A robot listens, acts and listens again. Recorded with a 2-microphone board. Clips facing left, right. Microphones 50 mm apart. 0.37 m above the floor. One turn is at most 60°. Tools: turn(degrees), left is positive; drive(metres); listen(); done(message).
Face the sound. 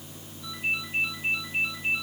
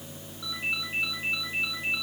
turn(degrees=-60)
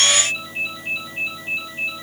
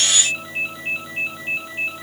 turn(degrees=-35)
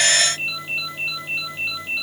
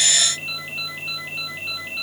done("Found it: a ringtone, straight ahead, over 4 m away.")